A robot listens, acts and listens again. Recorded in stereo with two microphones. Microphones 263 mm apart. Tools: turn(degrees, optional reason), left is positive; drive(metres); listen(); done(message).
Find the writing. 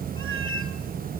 listen()
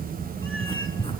turn(degrees=20, reason="The writing: about 20° left or 160° left.")
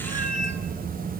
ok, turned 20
listen()
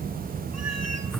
listen()
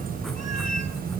done("I heard writing, but can't make it out now. It was about straight ahead or 140° left.")